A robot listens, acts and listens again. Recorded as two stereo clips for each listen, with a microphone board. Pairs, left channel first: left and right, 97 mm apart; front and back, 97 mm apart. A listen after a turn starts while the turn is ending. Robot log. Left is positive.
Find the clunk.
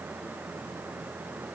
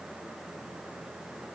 cmd idle
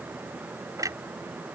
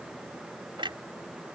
note: The clunk: 145° right.
cmd yaw -145
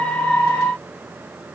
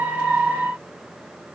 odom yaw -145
end: I heard a clunk from this way, but can't make it out now.